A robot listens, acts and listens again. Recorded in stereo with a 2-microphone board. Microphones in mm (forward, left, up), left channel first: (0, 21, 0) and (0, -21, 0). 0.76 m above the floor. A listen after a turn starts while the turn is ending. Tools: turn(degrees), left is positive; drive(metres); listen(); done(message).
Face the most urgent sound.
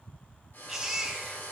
turn(degrees=-30)
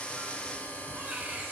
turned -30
turn(degrees=-145)
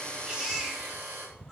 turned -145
turn(degrees=-10)
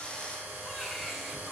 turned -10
done("Facing the baby crying, 2 to 4 m away.")